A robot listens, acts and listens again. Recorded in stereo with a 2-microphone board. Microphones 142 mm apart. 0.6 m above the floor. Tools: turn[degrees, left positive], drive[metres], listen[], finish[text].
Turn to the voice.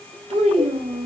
Thought: The child speaking: about 50° right or 130° right.
Action: turn[-50]
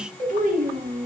Thought: So it is at 80° right.
Action: turn[-80]
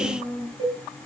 Thought: The child speaking is now 10° left.
Action: turn[10]
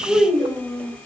Action: finish[Found it: a child speaking, straight ahead, 1 to 2 m away.]